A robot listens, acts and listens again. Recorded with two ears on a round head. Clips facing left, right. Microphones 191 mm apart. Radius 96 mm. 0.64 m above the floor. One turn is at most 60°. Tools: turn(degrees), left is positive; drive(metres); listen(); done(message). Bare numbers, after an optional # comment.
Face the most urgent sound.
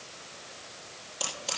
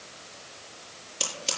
listen()
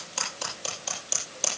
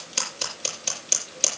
listen()
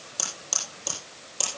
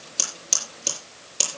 done("I can't make out anything urgent to turn to.")